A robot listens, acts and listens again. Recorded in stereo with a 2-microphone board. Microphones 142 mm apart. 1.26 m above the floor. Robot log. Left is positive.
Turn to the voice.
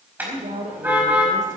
note: The woman speaking: about 65° right or 115° right.
cmd yaw -65
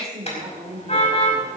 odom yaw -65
note: So it is at 50° right.
cmd yaw -50
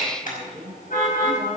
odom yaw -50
end: Found it: a woman speaking, straight ahead, 2 to 4 m away.